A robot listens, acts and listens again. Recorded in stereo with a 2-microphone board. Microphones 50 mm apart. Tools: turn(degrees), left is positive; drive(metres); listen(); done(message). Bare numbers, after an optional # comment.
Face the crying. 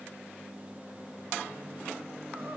listen()
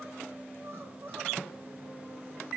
# The crying: about 55° right or 125° right.
turn(-55)
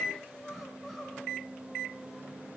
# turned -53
done("Facing the crying, 2 to 4 m away.")